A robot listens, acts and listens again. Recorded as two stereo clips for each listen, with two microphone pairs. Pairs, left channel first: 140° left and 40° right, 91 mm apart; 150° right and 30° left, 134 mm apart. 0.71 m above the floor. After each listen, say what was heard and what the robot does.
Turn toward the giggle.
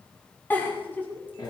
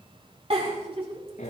The giggle: 70° left. Turn 70° left.
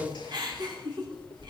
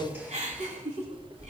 Found it: a giggle, straight ahead, over 4 m away.